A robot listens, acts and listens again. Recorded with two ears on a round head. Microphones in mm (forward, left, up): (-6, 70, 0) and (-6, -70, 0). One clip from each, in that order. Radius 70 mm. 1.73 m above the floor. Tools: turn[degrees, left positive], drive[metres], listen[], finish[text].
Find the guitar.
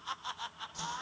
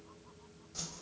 Action: listen[]
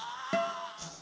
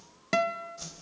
Thought: The guitar: about 45° right or 135° right.
Action: turn[-45]
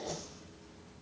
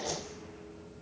Action: listen[]
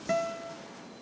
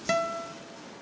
Thought: So it is at 85° right.
Action: turn[-85]
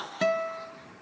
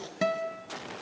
Thought: The guitar is now 10° left.
Action: turn[10]
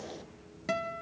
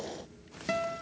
Action: finish[Facing the guitar, 1 to 2 m away.]